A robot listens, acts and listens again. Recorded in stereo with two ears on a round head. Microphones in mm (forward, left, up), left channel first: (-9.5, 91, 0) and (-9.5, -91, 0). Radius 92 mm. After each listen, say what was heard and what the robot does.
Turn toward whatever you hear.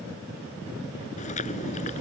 The chewing: about 40° left or 140° left. Turn 40° left.
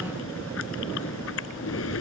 So it is at 100° left. Turn 100° left.
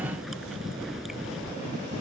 Found it: chewing, straight ahead.